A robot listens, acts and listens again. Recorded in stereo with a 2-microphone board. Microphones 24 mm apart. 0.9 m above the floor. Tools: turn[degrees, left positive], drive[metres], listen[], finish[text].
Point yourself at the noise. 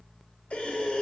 Action: turn[90]
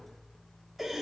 Thought: So it is at 10° right.
Action: turn[-10]
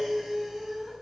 Action: finish[Facing the breathing, 1 to 2 m away.]